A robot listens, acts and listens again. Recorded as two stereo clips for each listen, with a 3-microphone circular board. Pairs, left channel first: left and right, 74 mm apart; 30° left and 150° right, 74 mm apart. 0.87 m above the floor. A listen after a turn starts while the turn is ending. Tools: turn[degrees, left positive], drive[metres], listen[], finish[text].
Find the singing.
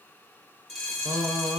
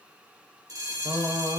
Thought: The singing: 130° right.
Action: turn[-130]
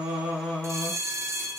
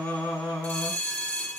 Thought: The singing is now 10° left.
Action: turn[10]
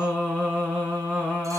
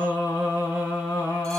Action: finish[Found it: singing, straight ahead.]